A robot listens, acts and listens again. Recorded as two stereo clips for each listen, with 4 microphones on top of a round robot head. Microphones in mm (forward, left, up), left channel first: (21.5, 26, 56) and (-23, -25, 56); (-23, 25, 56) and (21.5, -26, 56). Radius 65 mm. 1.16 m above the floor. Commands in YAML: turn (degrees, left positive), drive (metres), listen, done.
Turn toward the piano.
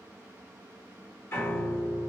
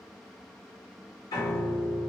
turn: 105
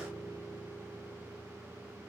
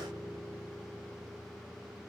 done: "Facing the piano, 1 to 2 m away."